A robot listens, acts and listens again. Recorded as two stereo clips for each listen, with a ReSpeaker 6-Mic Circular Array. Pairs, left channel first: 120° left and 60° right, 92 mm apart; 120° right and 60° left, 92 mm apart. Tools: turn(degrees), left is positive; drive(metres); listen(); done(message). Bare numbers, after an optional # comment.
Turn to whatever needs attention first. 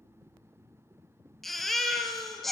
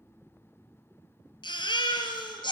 # The baby crying: 150° right.
turn(-150)
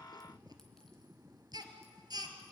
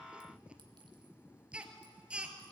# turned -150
# The baby crying is now 20° right.
turn(-20)
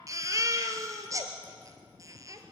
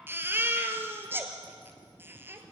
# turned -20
done("Found it: a baby crying, straight ahead, 1 to 2 m away.")